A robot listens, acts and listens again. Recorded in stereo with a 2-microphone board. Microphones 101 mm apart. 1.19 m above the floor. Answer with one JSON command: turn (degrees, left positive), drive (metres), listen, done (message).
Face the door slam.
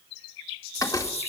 {"turn": 30}
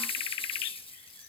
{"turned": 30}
{"listen": true}
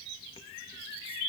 {"done": "I heard a door slam, but can't make it out now. It was about straight ahead or 120° left."}